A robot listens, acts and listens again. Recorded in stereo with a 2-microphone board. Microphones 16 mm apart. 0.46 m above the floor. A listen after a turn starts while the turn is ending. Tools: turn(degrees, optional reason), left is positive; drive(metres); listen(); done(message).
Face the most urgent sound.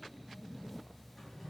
listen()
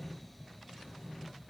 listen()
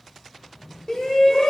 turn(degrees=45, reason="The shout: about 45° left or 135° left.")
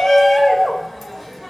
done("Facing the shout.")